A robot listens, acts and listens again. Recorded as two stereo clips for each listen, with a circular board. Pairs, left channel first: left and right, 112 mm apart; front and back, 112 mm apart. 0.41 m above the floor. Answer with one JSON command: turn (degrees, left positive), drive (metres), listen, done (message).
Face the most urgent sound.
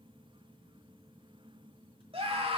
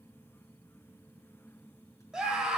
{"turn": -95}
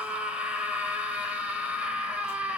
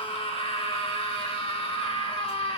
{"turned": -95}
{"turn": -15}
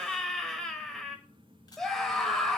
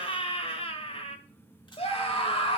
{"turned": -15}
{"done": "Facing the scream, 1 to 2 m away."}